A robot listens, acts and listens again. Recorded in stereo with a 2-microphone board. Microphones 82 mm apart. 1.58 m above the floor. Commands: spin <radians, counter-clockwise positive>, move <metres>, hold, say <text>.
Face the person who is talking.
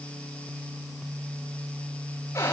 hold
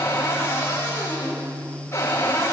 hold
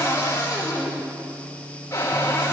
say I can't make out anyone speaking to turn to.